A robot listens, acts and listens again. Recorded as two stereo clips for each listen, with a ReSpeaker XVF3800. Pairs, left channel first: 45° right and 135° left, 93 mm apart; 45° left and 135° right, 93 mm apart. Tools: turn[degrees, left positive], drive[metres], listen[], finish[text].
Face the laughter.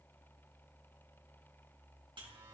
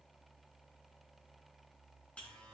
Action: listen[]
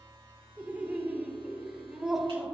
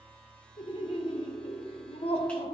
Thought: The laughter: 45° left.
Action: turn[45]
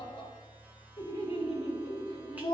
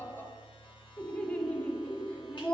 Thought: The laughter is now 35° right.
Action: turn[-35]
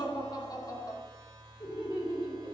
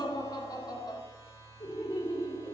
Action: finish[Found it: laughter, straight ahead, 2 to 4 m away.]